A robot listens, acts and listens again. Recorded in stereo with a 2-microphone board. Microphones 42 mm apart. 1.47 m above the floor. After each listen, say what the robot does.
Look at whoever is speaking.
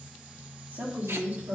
Turn 45° right.
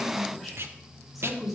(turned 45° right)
Facing the woman speaking.